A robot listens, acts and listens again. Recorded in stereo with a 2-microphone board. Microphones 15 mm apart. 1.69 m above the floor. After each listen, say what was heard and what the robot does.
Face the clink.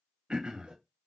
Keep listening.
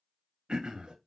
Keep listening.
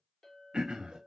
The clink: about 25° left or 155° left. Turn 25° left.
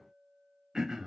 Found it: a clink, straight ahead.